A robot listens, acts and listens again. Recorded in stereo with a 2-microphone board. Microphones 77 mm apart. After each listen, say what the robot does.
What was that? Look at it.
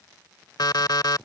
Turn 60° left.
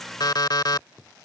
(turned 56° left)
Turn 65° left.
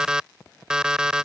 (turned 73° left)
Turn 10° right.
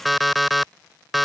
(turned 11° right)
Facing the alarm clock.